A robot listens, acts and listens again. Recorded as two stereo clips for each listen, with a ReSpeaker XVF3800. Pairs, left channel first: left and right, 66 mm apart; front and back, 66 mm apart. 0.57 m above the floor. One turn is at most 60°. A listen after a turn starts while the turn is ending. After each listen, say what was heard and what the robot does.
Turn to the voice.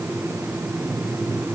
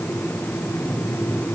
Keep listening.
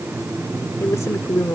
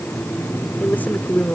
The woman speaking: 55° left. Turn 55° left.
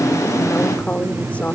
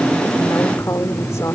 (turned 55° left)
The woman speaking is now 25° left. Turn 25° left.
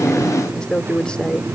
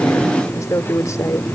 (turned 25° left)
The woman speaking is now 15° left. Turn 15° left.
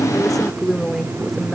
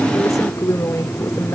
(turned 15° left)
Facing the woman speaking.